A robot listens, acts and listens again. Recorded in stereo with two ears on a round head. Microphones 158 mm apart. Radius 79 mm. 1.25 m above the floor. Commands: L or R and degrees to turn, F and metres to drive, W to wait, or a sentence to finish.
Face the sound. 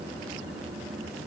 W
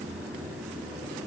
W
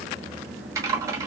R20
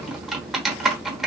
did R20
Facing the typing on a keyboard, 1 to 2 m away.